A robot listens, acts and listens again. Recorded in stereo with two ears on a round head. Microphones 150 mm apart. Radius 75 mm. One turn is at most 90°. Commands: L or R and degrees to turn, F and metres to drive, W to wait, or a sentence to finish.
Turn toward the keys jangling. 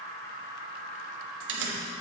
R90
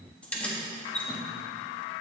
L10
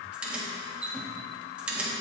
Found it: keys jangling, straight ahead.